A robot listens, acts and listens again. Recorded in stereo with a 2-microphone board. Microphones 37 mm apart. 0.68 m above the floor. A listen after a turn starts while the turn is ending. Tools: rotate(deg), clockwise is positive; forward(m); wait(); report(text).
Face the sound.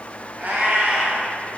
rotate(60)
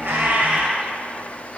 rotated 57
rotate(35)
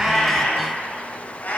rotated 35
rotate(-50)
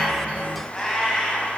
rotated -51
rotate(-15)
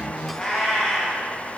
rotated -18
report("Facing the cat meowing.")